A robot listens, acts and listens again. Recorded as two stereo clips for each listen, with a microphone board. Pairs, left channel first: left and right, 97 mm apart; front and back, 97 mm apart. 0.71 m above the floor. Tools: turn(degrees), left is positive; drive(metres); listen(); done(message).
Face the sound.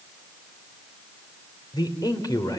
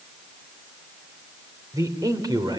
turn(degrees=140)
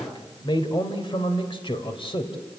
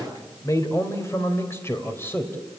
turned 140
turn(degrees=65)
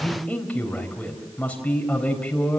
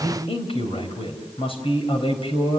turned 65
turn(degrees=10)
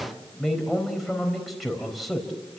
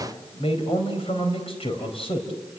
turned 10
done("Facing the man speaking, over 4 m away.")